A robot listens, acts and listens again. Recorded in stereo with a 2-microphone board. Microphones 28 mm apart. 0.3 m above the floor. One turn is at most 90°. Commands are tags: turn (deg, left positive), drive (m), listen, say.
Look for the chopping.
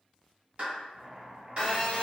<turn deg="-45"/>
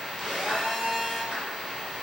<listen/>
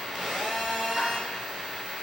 <listen/>
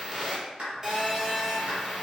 <say>I heard chopping, but can't make it out now. It was about straight ahead or 90° right.</say>